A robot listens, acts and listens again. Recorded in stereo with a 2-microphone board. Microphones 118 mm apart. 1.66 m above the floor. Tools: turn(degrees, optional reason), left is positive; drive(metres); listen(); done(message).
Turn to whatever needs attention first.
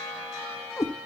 listen()
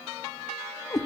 listen()
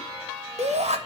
turn(degrees=-70, reason="The shout: about 70° right or 110° right.")
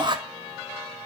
turn(degrees=-40, reason="So it is at 40° right.")
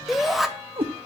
done("Found it: a shout, straight ahead, 2 to 4 m away.")